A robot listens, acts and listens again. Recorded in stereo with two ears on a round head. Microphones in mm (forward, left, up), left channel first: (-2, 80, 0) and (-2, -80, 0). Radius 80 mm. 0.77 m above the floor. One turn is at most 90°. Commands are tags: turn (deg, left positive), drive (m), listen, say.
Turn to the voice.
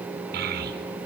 <turn deg="-55"/>
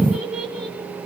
<say>Found it: a child speaking, straight ahead.</say>